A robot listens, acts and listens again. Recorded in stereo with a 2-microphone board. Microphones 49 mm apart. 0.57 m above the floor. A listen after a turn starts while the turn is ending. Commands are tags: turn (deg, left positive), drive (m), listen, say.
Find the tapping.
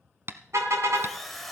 <turn deg="-50"/>
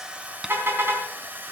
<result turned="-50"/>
<listen/>
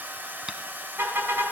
<listen/>
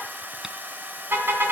<say>I heard tapping, but can't make it out now. It was about straight ahead or 80° right.</say>